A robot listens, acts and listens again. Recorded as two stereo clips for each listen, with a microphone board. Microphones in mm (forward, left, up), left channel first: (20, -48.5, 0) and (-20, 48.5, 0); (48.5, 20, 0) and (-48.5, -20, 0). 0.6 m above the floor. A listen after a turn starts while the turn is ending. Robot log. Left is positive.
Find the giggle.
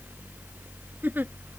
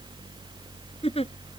note: The giggle: 40° left.
cmd yaw +40
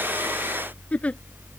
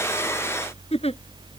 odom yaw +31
note: The giggle is now 10° left.
cmd yaw +10
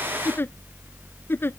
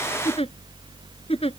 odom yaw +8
end: Found it: a giggle, straight ahead.